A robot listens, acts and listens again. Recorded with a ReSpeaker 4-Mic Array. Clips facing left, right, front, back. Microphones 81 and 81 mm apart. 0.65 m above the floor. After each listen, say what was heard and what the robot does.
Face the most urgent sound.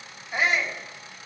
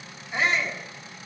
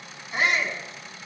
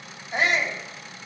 The shout: 170° left. Turn 170° left.
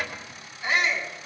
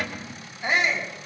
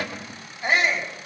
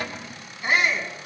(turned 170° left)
The shout is now 25° right. Turn 25° right.
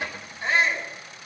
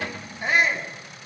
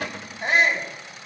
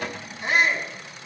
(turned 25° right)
The shout is now 10° right. Turn 10° right.
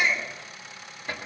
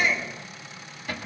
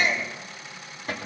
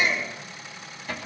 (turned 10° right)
Found it: a shout, straight ahead.